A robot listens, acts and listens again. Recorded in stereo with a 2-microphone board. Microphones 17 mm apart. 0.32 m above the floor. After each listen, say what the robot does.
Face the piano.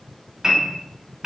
Turn 45° right.
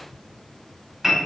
Turn 10° right.
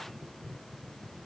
Keep listening.
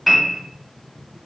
Facing the piano, under 1 m away.